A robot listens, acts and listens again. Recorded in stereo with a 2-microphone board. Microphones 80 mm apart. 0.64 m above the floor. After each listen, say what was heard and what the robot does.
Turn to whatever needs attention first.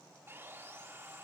Keep listening.
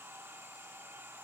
Keep listening.
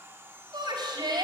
The shout: about 60° right or 120° right. Turn 60° right.
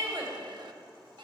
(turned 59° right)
So it is at 60° right. Turn 60° right.
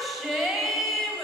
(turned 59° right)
Facing the shout, 2 to 4 m away.